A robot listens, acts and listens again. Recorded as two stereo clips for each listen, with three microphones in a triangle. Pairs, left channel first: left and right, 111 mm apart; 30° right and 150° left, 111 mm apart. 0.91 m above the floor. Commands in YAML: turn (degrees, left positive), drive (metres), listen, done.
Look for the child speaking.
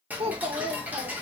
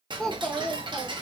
turn: -115
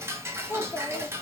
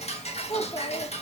turn: 25
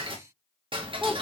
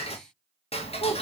listen: true
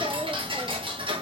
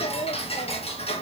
listen: true
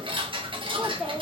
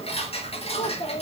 done: "Found it: a child speaking, straight ahead, 1 to 2 m away."